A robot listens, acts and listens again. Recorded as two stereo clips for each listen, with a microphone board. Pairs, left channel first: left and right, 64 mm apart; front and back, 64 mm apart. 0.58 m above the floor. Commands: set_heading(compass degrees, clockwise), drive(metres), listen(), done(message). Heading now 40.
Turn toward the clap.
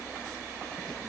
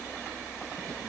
listen()
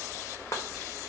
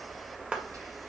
set_heading(290)
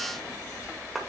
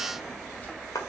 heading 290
done("Found it: a clap, straight ahead, 1 to 2 m away.")